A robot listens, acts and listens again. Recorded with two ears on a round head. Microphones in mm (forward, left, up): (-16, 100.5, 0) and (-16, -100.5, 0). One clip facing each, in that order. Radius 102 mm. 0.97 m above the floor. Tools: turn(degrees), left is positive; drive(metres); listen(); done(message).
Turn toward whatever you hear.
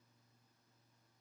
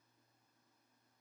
listen()
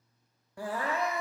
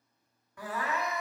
turn(degrees=25)
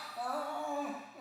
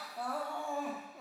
done("Facing the crying, under 1 m away.")